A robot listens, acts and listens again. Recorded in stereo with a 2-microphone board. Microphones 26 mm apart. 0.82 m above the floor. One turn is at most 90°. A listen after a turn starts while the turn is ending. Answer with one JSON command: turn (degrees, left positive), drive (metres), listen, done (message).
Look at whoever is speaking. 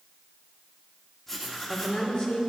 {"turn": 45}
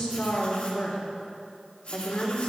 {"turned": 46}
{"turn": 90}
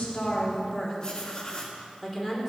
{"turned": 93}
{"done": "Found it: a woman speaking, straight ahead, 2 to 4 m away."}